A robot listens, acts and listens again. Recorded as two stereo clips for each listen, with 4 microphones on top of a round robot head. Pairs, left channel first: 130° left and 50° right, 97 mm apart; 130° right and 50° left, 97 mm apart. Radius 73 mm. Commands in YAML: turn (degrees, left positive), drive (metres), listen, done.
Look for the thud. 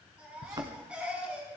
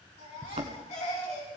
turn: 10
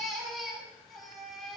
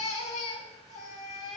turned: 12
done: "Facing where the thud came from. I can't hear it now."